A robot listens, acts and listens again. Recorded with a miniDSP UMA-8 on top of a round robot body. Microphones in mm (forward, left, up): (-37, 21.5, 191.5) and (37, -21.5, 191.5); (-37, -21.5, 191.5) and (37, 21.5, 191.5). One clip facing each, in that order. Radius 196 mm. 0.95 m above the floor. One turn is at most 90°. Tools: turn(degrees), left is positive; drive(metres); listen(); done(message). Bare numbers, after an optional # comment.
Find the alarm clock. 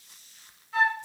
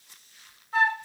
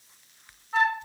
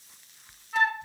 listen()
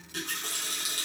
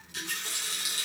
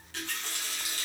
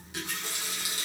listen()
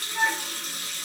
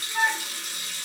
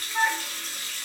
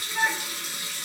done("I can't make out an alarm clock to turn to.")